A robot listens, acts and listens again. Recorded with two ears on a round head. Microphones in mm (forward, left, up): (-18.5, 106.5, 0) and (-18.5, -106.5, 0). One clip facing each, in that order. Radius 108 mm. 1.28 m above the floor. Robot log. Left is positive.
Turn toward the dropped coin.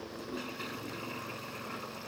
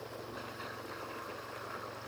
cmd idle
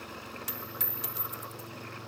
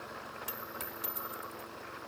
note: The dropped coin: about 25° left or 155° left.
cmd yaw +25
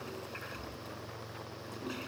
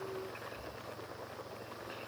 cmd idle
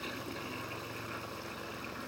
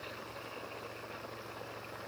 end: I heard a dropped coin, but can't make it out now. It was about straight ahead or 130° left.